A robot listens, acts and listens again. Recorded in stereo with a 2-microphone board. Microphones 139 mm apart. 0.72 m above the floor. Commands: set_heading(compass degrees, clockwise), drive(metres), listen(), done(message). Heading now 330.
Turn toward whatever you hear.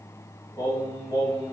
set_heading(305)
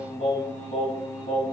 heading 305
set_heading(180)
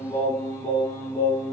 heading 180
set_heading(155)
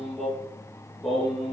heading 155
done("Facing the singing.")